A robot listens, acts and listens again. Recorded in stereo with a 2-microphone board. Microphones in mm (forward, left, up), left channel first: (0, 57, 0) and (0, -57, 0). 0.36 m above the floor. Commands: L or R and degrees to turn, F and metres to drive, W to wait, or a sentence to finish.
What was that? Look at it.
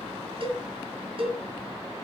R55
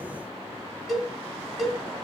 Facing the cowbell.